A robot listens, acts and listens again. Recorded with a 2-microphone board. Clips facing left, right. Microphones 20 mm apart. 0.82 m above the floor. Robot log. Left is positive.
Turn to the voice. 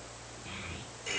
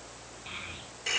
cmd yaw -30
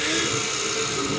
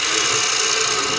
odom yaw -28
cmd idle
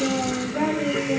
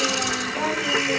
note: So it is at 15° left.
cmd yaw +15
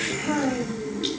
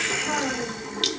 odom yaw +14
end: Found it: a child speaking, straight ahead.